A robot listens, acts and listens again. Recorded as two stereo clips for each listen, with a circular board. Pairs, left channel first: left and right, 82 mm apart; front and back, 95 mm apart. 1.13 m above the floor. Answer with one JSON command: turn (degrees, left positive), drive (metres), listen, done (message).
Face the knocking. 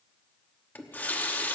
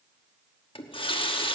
{"listen": true}
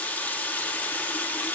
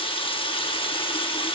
{"listen": true}
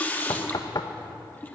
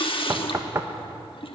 {"turn": 125}
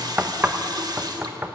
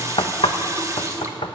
{"turn": -20}
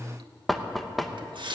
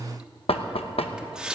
{"done": "Facing the knocking."}